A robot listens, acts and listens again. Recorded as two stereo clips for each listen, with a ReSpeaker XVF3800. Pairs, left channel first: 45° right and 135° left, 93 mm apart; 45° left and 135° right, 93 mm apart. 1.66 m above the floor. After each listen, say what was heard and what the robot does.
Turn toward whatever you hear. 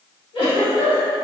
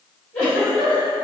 The giggle: 30° right. Turn 30° right.
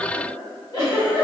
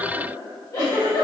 Found it: a giggle, straight ahead.